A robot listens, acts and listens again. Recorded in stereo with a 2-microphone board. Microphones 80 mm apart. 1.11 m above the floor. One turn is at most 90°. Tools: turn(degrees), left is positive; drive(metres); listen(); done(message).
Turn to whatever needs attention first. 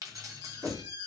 turn(degrees=-55)
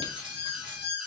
done("Facing the alarm.")